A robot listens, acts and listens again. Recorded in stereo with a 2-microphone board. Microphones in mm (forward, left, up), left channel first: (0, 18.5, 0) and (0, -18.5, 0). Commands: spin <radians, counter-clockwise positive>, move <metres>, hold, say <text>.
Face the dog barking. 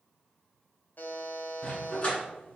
spin 0.70
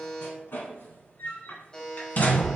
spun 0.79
spin 0.79
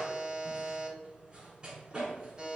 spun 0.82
spin -0.35
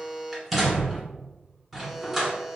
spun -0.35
say Facing the dog barking, 1 to 2 m away.